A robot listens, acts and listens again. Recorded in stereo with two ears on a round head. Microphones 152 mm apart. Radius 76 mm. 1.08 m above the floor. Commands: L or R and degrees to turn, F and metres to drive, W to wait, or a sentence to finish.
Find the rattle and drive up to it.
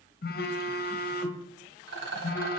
R90
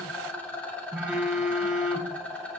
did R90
L10
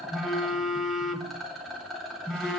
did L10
F1.0
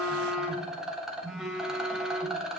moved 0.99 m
F1.0
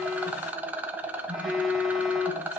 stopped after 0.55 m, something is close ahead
R10
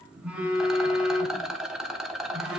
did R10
Arrived at the rattle, straight ahead.